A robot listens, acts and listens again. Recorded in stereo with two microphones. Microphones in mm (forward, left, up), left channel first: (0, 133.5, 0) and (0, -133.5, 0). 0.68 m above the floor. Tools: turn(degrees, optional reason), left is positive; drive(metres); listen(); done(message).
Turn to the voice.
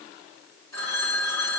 listen()
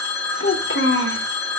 turn(degrees=50, reason="The child speaking: about 50° left or 130° left.")
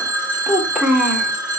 done("Found it: a child speaking, straight ahead, 1 to 2 m away.")